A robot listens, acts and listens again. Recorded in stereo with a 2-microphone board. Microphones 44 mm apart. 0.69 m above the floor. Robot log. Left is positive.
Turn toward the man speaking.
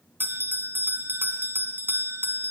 cmd idle
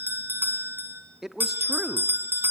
cmd yaw -30
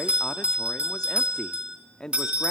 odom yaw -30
note: So it is at 20° left.
cmd yaw +20
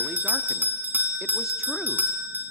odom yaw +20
cmd idle
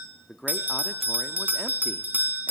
end: Facing the man speaking, under 1 m away.